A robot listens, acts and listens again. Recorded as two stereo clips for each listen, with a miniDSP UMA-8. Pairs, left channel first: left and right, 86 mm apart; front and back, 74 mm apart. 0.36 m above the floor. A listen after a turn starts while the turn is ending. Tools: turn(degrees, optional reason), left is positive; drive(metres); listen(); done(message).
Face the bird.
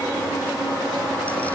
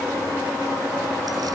listen()
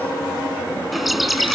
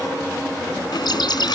done("Found it: a bird, straight ahead.")